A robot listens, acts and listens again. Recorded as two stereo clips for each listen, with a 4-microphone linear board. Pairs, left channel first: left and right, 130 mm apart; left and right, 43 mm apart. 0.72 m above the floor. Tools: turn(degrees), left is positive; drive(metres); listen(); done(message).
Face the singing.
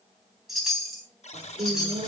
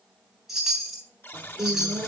turn(degrees=-55)
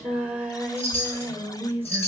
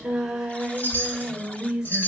turn(degrees=-15)
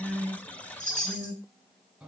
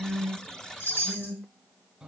done("Found it: singing, straight ahead.")